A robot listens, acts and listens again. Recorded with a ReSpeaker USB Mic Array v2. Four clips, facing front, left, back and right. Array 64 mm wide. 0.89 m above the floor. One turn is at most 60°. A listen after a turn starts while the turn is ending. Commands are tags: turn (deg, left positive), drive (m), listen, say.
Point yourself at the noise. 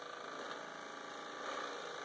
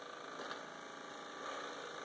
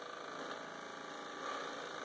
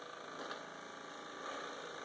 <listen/>
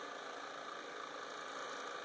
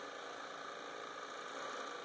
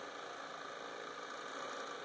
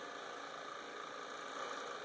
<listen/>
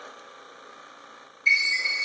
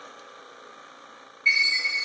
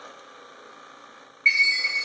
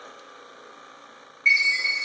<turn deg="-60"/>
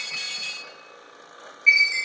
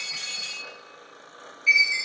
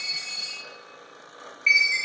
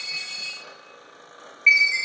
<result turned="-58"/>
<turn deg="-60"/>
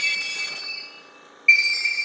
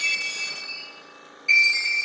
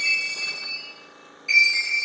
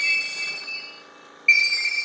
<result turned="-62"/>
<turn deg="-45"/>
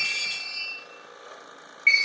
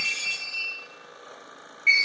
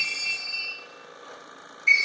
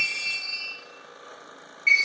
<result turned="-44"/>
<say>Facing the chime, 1 to 2 m away.</say>